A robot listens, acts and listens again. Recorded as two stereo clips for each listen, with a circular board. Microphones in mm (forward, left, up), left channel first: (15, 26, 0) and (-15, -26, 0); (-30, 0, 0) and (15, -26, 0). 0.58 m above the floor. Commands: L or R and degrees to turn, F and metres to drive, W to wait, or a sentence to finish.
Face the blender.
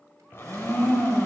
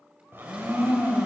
L10
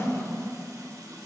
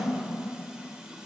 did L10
Found it: a blender, straight ahead.